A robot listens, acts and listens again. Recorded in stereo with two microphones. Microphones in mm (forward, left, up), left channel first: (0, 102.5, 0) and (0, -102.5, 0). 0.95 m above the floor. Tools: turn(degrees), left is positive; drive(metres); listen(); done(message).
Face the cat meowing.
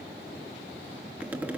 listen()
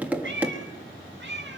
turn(degrees=-65)
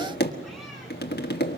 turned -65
listen()
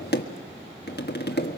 listen()
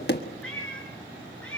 done("Facing the cat meowing.")